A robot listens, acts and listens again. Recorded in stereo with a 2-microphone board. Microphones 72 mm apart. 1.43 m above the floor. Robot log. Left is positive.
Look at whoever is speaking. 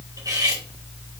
cmd idle
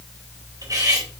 cmd idle
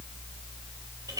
end: I can't make out anyone speaking, only cutlery clinking.